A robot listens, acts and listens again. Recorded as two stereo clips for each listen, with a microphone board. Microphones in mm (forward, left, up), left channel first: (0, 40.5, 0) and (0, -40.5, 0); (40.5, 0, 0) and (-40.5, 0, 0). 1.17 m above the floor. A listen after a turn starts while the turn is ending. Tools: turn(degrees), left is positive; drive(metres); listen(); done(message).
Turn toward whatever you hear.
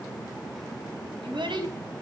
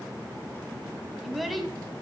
turn(degrees=-90)
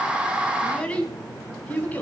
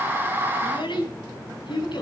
turn(degrees=20)
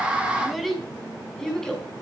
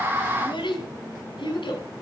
done("Found it: a child speaking, straight ahead.")